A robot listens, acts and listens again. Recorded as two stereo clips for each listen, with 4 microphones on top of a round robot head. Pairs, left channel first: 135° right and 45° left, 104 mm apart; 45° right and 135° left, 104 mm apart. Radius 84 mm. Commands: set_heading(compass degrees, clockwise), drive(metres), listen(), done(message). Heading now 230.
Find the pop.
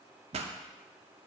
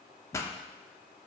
set_heading(210)
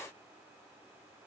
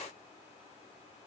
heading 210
done("Facing where the pop came from. I can't hear it now.")